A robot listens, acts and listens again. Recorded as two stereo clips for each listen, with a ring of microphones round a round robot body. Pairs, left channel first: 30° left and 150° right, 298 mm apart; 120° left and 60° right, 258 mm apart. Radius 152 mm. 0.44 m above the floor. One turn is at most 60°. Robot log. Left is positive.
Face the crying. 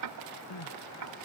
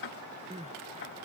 end: Found it: crying, straight ahead.